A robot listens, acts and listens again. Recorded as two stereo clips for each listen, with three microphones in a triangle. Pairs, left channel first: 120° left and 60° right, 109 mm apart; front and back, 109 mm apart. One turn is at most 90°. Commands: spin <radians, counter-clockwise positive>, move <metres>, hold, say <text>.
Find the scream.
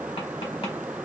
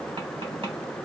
hold
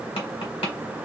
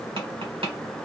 hold
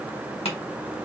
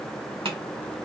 say I can't make out a scream to turn to.